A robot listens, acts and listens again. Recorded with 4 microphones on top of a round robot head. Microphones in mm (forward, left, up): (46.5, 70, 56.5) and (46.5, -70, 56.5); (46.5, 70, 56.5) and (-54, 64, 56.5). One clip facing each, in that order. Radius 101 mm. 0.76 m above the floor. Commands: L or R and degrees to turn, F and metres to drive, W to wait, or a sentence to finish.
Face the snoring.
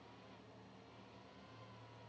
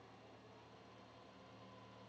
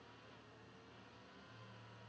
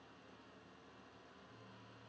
W
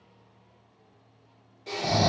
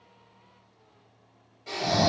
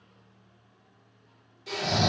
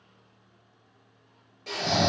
L155
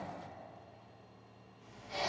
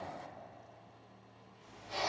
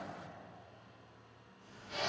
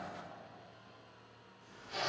R25
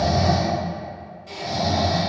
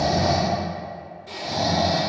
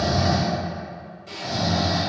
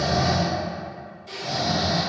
Facing the snoring.